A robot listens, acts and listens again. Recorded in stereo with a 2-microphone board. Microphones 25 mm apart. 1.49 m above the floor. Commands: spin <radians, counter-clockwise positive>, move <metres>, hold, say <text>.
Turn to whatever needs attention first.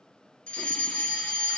spin 1.13
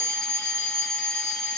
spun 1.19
spin 0.70
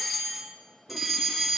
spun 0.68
say Found it: a fire alarm, straight ahead, 2 to 4 m away.